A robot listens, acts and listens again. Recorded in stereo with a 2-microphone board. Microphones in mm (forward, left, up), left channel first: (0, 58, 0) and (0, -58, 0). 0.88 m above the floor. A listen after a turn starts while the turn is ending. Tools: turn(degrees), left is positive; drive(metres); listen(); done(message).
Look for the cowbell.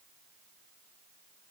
listen()
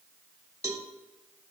turn(degrees=-25)
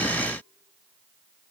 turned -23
listen()
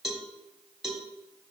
done("Found it: a cowbell, straight ahead.")